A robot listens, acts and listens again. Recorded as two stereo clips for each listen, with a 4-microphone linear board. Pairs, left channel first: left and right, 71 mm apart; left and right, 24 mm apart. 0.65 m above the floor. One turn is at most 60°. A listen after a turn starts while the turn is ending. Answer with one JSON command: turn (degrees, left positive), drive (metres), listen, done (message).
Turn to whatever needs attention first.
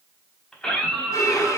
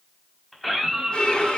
{"turn": 30}
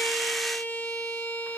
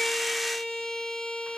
{"listen": true}
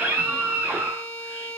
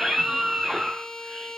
{"turn": -20}
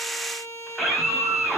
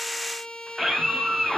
{"done": "Facing the scream, over 4 m away."}